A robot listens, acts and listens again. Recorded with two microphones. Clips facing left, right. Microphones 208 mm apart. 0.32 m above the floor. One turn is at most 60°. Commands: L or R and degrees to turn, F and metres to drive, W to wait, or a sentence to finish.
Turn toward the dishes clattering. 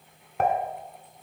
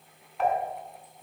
L55
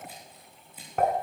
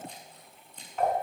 L60
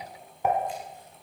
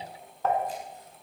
L15
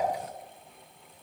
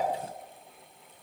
W
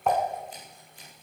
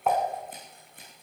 Found it: dishes clattering, straight ahead.